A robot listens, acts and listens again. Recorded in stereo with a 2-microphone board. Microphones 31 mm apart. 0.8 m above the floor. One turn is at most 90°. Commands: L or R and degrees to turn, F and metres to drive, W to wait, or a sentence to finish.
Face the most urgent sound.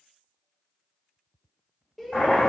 L30
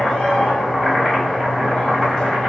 W
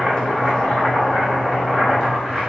W
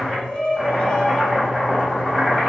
L90
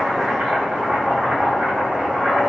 L60
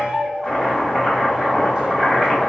R40
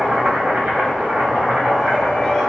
W
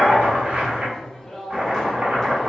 L20
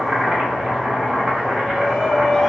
Facing the shout.